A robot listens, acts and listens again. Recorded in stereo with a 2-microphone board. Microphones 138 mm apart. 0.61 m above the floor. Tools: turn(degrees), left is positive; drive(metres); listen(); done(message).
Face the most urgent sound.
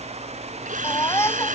turn(degrees=20)
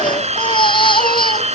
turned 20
turn(degrees=145)
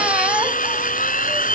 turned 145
listen()
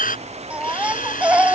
turn(degrees=-10)
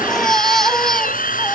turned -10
done("Found it: a baby crying, straight ahead.")